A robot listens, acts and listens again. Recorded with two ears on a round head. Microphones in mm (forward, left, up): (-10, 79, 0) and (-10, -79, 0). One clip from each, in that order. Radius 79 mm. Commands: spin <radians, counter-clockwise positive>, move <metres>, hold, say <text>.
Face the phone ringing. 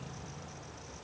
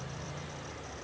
hold
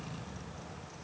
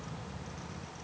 hold
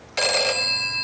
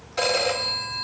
spin 1.13
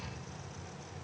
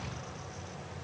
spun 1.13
hold
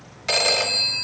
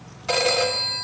spin 0.70
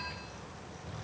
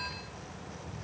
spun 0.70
hold
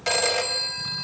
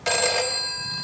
say Found it: a phone ringing, straight ahead.